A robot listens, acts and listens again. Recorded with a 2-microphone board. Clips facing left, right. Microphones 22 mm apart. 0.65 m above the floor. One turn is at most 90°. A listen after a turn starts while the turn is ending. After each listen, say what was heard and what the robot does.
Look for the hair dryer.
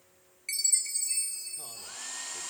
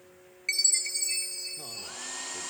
Turn 30° right.
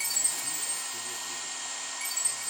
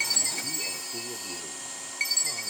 So it is at 20° left. Turn 20° left.
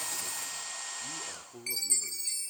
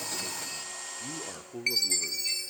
Facing the hair dryer.